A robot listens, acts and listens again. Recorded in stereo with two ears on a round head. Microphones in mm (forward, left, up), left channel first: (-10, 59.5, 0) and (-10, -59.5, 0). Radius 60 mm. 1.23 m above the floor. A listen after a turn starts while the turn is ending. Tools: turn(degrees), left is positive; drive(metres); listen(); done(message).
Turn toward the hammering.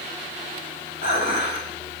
listen()
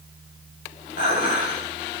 listen()
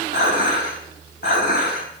done("I can't make out hammering, only dishes clattering.")